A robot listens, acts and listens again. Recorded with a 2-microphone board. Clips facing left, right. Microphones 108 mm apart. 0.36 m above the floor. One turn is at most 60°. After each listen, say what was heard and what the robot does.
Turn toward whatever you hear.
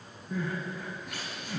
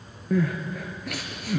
Turn 60° right.
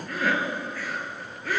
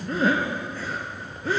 So it is at 30° right. Turn 30° right.
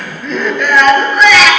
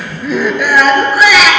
Facing the crying.